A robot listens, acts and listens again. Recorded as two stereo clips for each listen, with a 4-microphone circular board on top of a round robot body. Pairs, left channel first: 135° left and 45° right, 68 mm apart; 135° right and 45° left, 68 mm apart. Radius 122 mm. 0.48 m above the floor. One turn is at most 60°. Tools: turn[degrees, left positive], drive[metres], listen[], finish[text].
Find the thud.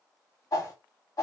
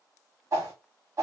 Action: listen[]
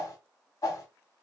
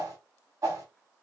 Action: listen[]
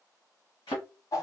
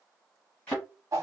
Thought: The thud: 155° left.
Action: turn[60]
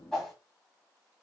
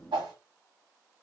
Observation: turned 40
Thought: Nothing new. It was at 115° left.
Action: turn[60]
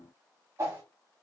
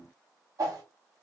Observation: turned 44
Thought: Nothing new. It was at 70° left.
Action: turn[60]
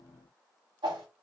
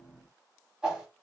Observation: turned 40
Thought: Nothing new. It was at 30° left.
Action: turn[30]
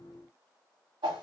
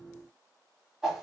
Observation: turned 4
Thought: Nothing new. It was at 25° left.
Action: turn[25]
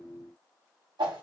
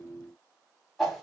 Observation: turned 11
Thought: Nothing new. It was at 15° left.
Action: turn[15]
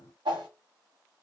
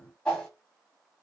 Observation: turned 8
Action: finish[Facing where the thud came from. I can't hear it now.]